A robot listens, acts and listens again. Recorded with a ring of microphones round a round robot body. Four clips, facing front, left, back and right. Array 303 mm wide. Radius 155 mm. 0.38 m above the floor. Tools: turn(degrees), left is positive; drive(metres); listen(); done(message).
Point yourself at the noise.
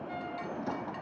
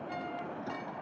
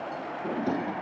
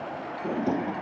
turn(degrees=-125)
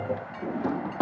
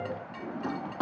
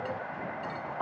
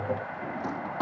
turn(degrees=10)
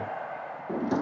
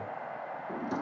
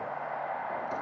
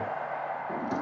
done("Found it: a drawer, straight ahead.")